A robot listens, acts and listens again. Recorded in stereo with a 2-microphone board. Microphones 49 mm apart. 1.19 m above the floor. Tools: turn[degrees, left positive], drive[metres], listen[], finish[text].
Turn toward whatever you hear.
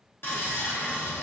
Thought: The sawing: about 55° left or 125° left.
Action: turn[55]
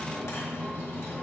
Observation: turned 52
Thought: So it is at 75° left.
Action: turn[75]
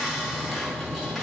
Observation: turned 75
Action: finish[Facing the sawing.]